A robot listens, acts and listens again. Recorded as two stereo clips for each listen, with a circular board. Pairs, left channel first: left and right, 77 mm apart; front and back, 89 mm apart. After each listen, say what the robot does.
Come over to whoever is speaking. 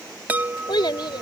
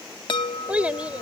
Turn 105° left.
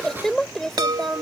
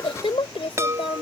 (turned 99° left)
Drive 1.0 m forward.
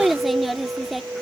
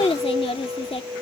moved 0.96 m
Drive 1.0 m forward.
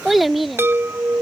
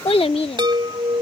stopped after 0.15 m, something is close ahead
I am next to the child speaking.